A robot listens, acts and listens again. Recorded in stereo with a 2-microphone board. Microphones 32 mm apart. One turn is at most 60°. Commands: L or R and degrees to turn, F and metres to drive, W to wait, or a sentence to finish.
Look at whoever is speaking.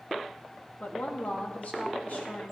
L50
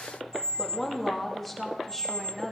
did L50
Facing the woman speaking, 2 to 4 m away.